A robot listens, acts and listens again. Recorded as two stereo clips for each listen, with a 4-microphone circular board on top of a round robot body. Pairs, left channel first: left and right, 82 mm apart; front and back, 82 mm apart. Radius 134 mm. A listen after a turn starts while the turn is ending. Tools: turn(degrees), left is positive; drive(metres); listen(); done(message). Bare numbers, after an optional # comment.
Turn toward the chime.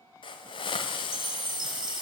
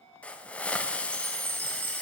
# The chime: 120° right.
turn(-120)
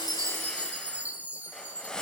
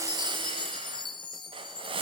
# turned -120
# The chime is now 20° right.
turn(-20)
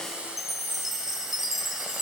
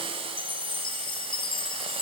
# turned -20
done("Facing the chime, 1 to 2 m away.")